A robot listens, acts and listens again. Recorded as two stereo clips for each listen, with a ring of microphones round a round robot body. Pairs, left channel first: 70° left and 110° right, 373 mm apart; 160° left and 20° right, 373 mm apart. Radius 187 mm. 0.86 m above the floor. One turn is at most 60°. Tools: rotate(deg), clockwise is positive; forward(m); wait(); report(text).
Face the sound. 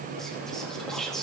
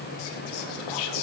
rotate(-60)
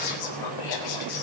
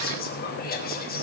rotate(-60)
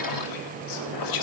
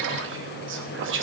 rotate(-35)
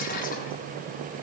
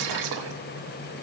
wait()
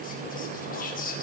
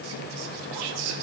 report("Found it: whispering, straight ahead.")